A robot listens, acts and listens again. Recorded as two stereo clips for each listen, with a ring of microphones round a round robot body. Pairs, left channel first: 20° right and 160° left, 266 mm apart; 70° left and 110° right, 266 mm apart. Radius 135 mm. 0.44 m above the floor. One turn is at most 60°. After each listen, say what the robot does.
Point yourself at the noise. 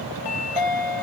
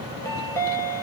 Turn 10° right.
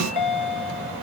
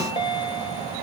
Found it: a chime, straight ahead, 1 to 2 m away.